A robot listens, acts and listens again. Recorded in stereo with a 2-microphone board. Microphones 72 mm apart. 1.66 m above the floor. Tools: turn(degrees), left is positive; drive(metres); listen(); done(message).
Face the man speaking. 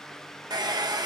listen()
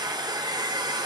listen()
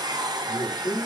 turn(degrees=65)
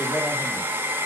listen()
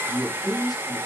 turn(degrees=55)
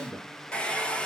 turn(degrees=15)
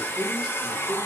done("Facing the man speaking, 2 to 4 m away.")